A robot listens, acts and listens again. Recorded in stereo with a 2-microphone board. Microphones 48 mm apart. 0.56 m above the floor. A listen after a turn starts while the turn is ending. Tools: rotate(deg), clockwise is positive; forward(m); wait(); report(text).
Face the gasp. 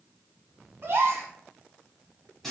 rotate(55)
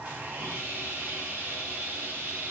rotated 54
wait()
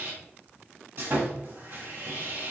report("I heard a gasp, but can't make it out now. It was about straight ahead or 70° right.")